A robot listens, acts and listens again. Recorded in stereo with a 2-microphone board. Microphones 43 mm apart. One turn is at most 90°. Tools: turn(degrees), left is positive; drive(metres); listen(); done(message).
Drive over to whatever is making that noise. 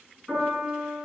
turn(degrees=-30)
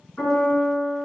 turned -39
turn(degrees=25)
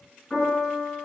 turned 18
drive(metres=1.0)
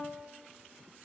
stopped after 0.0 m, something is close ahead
listen()
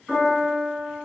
done("Blocked. The piano is further on, straight ahead.")